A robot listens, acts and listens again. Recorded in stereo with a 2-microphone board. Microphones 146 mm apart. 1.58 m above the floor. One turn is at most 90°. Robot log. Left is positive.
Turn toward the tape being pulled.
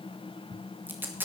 cmd yaw -30
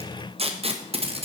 note: So it is at 135° right.
cmd yaw -90
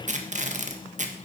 note: The tape being pulled is now 60° right.
cmd yaw -60
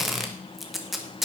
end: Found it: tape being pulled, straight ahead, 1 to 2 m away.